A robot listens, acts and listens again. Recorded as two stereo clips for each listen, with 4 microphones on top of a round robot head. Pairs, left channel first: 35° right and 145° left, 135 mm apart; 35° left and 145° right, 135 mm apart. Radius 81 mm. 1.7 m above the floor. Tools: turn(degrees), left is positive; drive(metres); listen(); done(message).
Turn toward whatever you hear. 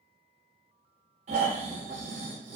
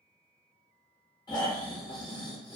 turn(degrees=100)
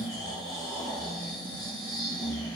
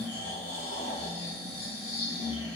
turn(degrees=25)
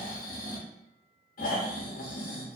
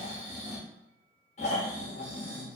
done("Found it: snoring, straight ahead, under 1 m away.")